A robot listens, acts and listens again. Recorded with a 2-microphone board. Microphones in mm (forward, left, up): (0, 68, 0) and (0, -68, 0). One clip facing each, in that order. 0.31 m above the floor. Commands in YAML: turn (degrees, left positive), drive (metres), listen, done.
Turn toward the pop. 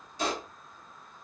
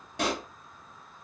turn: -90
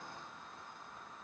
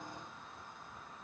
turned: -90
done: "I heard a pop from this way, but can't make it out now."